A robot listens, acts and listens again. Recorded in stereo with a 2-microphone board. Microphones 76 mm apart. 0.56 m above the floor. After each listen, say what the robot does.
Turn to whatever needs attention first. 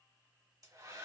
Keep listening.
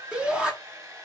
Turn 30° right.
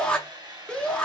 Turn 15° left.
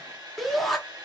Found it: a shout, straight ahead, 1 to 2 m away.